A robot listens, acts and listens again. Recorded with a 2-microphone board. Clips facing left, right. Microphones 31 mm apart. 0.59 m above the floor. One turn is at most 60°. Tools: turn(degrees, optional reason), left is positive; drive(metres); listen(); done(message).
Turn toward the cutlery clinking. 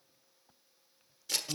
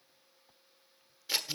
listen()
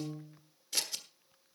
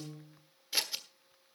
listen()
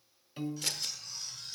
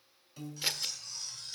turn(degrees=30)
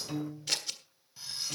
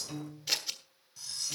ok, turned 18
turn(degrees=60, reason="So it is at 155° left.")
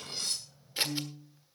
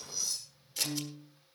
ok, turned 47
turn(degrees=60, reason="The cutlery clinking is now 110° left.")
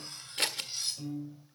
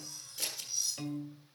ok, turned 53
turn(degrees=60, reason="The cutlery clinking is now 60° left.")
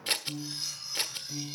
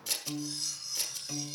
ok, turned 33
turn(degrees=25, reason="The cutlery clinking is now 25° left.")
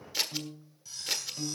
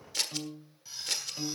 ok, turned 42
turn(degrees=-20, reason="The cutlery clinking is now 20° right.")
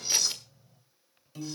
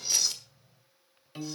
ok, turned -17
done("Found it: cutlery clinking, straight ahead.")